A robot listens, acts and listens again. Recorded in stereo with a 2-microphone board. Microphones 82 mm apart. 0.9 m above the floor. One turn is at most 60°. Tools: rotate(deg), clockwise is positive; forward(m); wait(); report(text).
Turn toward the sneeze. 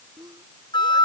rotate(55)
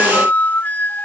wait()
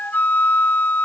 report("I heard a sneeze, but can't make it out now. It was about straight ahead or 70° right.")